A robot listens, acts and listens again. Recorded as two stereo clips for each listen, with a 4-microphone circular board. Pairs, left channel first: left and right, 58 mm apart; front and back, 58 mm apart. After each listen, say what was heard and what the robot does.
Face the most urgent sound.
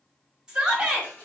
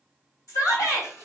The shout: 15° right. Turn 15° right.
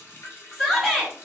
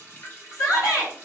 Facing the shout.